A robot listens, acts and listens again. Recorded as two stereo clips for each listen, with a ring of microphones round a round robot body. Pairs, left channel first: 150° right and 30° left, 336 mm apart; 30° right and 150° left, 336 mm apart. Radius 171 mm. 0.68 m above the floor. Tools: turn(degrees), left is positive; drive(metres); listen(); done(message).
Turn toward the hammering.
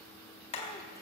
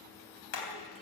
turn(degrees=-75)
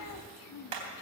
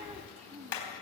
turn(degrees=15)
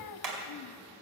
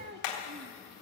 done("Found it: hammering, straight ahead.")